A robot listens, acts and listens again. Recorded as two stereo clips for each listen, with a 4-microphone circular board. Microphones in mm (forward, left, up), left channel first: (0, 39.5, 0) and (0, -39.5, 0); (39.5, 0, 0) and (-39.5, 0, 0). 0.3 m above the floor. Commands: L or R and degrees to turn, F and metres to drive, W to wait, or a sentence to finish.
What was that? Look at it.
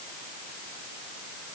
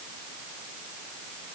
W
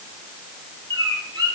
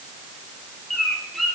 R90
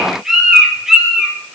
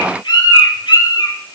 Found it: a bird, straight ahead, over 4 m away.